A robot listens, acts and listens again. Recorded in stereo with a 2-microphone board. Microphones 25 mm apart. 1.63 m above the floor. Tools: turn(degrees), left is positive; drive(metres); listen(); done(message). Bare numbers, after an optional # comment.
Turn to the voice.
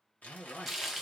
# The man speaking: about 40° left or 140° left.
turn(40)
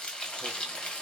listen()
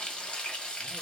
listen()
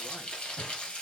done("I heard a man speaking, but can't make it out now. It was about straight ahead or 100° left.")